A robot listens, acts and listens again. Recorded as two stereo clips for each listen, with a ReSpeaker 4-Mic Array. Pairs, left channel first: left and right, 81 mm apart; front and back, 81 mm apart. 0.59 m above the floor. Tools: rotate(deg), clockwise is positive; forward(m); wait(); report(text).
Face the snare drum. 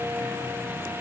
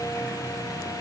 wait()
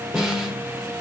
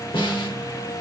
report("Found it: a snare drum, straight ahead.")